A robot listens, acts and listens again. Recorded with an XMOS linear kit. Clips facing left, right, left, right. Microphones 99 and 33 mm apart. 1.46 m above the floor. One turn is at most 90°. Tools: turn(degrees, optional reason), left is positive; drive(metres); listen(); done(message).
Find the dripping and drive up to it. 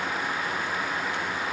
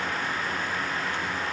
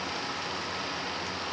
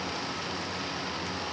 listen()
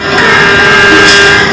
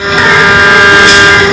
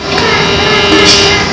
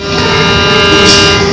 listen()
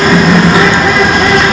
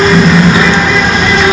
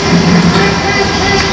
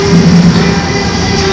done("I can't make out dripping, only a bird.")